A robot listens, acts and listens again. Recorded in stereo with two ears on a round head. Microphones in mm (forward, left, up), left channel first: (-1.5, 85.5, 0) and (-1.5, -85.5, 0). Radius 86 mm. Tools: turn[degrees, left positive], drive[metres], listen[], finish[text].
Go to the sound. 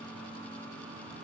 Action: listen[]
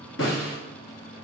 Thought: The snare drum: about 70° left or 110° left.
Action: turn[70]
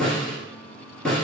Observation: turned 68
Action: drive[1.0]
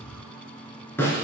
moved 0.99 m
Thought: The snare drum is now 10° left.
Action: turn[10]
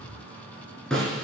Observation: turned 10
Action: drive[1.0]
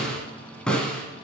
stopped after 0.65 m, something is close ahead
Action: finish[Arrived at the snare drum, straight ahead.]